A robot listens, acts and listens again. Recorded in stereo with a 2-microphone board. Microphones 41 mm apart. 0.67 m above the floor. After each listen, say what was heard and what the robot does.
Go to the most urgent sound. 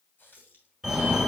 Turn 30° right.
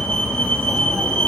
So it is at 25° left. Turn 25° left.
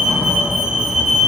The fire alarm is now 10° right. Turn 10° right.
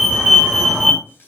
Drive 1.0 m forward.
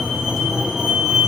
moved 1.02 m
Drive 1.0 m forward.
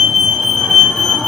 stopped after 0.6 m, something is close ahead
The fire alarm is now 10° left. Turn 10° left.
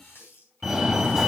I am next to the fire alarm.